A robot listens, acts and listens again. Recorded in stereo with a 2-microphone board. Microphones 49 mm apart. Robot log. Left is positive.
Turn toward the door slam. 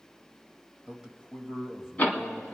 note: The door slam: about 30° left or 150° left.
cmd yaw +30
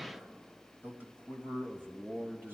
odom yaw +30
cmd idle
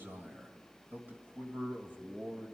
end: I heard a door slam, but can't make it out now. It was about straight ahead or 120° left.